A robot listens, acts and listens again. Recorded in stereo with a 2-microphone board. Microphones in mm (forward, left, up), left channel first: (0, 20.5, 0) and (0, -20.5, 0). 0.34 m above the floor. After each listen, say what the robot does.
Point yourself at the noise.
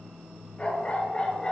Turn 25° left.
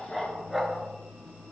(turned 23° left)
Turn 10° right.
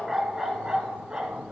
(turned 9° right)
Turn 30° right.
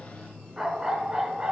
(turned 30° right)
Turn 25° right.
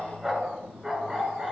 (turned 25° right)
Turn 10° right.
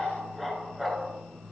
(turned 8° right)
Facing the dog barking.